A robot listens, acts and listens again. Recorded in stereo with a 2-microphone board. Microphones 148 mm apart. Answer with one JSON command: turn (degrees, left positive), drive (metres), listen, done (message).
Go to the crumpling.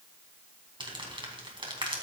{"turn": -35}
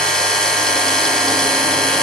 {"listen": true}
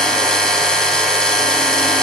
{"listen": true}
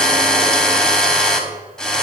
{"done": "I heard crumpling, but can't make it out now. It was about straight ahead or 110° right. I did not reach it."}